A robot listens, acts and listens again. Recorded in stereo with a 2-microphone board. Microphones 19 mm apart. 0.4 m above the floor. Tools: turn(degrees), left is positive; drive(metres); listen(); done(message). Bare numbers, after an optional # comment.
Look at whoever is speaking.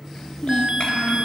turn(90)
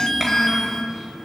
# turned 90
done("Facing the child speaking, over 4 m away.")